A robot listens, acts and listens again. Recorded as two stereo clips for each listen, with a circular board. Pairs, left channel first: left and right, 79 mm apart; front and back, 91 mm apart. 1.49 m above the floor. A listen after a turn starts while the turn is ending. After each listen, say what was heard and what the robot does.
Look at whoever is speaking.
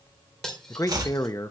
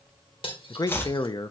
The man speaking: 45° left. Turn 45° left.
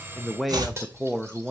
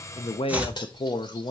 Found it: a man speaking, straight ahead, under 1 m away.